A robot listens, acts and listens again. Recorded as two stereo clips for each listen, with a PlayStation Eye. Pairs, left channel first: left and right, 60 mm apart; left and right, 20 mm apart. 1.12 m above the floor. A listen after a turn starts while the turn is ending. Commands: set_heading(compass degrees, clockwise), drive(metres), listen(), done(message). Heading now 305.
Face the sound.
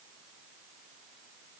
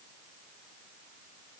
listen()
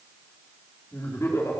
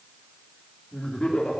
set_heading(255)
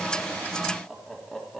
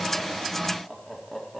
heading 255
done("Facing the laughter, 2 to 4 m away.")